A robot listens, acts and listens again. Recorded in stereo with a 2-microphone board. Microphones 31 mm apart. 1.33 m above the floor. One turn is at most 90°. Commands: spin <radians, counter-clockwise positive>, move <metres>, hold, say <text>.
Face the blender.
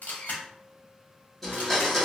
spin 0.52
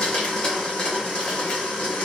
spin 1.57
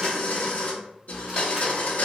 spin 1.13
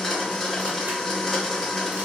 spin 0.17
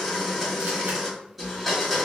say Facing the blender.